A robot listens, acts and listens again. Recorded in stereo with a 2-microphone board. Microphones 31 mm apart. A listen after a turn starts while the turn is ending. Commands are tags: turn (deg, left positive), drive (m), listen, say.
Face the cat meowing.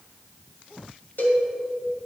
<listen/>
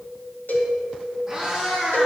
<turn deg="-30"/>
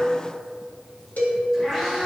<turn deg="15"/>
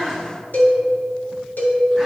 <say>Facing the cat meowing, over 4 m away.</say>